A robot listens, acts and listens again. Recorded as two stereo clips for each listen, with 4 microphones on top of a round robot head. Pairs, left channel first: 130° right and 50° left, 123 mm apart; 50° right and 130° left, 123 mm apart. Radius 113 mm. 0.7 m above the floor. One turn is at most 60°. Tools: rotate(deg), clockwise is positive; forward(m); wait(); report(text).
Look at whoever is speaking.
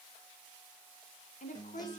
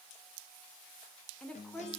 rotate(60)
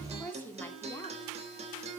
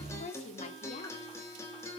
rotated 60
rotate(55)
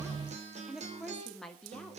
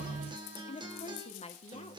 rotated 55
rotate(45)
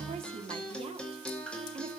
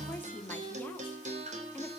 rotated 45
rotate(-25)
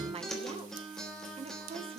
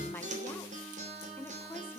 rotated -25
rotate(-20)
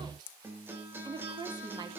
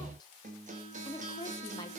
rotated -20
report("Found it: a woman speaking, straight ahead, 1 to 2 m away.")